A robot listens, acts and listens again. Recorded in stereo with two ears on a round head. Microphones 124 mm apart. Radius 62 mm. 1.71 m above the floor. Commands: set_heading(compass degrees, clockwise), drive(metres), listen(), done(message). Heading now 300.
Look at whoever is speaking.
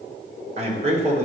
set_heading(350)
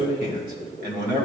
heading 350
set_heading(70)
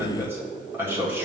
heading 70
set_heading(85)
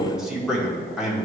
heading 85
done("Found it: a man speaking, straight ahead, 1 to 2 m away.")